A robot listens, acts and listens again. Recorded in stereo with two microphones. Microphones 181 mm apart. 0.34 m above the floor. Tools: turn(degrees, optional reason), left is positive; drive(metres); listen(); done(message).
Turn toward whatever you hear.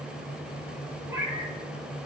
turn(degrees=-30)
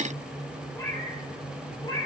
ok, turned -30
turn(degrees=25, reason="So it is at 25° left.")
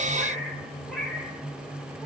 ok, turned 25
done("Found it: a cat meowing, straight ahead.")